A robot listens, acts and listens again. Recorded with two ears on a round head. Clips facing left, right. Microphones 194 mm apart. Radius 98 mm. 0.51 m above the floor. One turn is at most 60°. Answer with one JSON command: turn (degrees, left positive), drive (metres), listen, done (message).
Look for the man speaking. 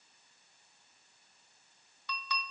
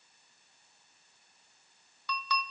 {"listen": true}
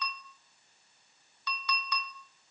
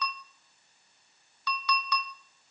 {"listen": true}
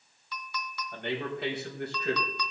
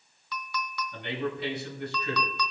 {"turn": 55}
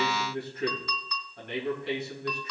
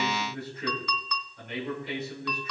{"turn": 55}
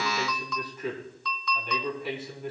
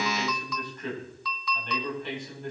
{"done": "Facing the man speaking."}